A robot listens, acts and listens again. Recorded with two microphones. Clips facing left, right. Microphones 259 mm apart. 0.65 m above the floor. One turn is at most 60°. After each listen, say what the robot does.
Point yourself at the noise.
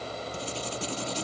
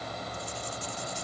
Turn 60° left.
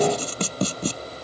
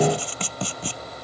Turn 45° left.
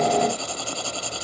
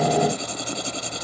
Turn 20° right.
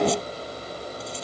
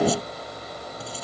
Keep listening.
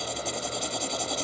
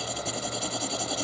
Found it: writing, straight ahead.